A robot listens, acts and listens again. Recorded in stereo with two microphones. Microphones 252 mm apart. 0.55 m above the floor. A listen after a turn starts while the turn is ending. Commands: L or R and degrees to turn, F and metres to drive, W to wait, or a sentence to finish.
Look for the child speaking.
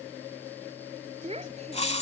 R25
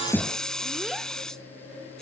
W
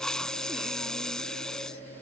W
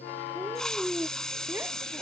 R30
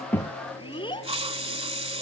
L20
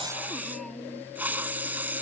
Found it: a child speaking, straight ahead.